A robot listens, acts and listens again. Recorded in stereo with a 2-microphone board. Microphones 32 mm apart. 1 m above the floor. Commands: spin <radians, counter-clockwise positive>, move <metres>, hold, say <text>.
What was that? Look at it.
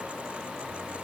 hold
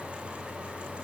hold
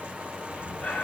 spin 1.05
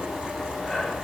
say Facing the breathing, 2 to 4 m away.